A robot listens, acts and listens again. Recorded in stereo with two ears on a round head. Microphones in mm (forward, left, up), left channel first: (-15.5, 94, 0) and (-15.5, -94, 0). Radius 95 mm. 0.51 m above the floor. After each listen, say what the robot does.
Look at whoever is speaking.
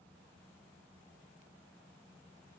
Keep listening.
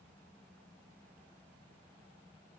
Keep listening.
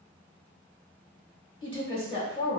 Turn 25° left.
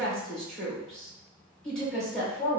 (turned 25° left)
Facing the woman speaking, 1 to 2 m away.